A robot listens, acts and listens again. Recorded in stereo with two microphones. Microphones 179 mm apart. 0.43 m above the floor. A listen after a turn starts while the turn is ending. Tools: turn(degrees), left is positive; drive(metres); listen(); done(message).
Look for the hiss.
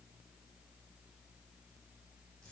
listen()
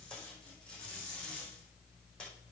listen()
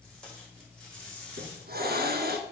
turn(degrees=-60)
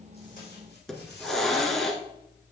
done("Facing the hiss, 1 to 2 m away.")